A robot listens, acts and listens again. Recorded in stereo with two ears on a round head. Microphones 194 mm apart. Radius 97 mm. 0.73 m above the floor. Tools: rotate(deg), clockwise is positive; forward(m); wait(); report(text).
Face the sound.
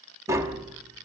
rotate(30)
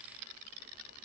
wait()
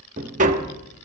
rotate(135)
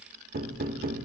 rotate(55)
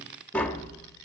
report("Found it: tapping, straight ahead, 1 to 2 m away.")